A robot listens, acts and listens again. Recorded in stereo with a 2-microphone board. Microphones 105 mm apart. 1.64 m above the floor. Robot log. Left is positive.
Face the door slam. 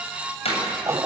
cmd yaw +90
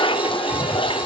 end: I heard a door slam from this way, but can't make it out now.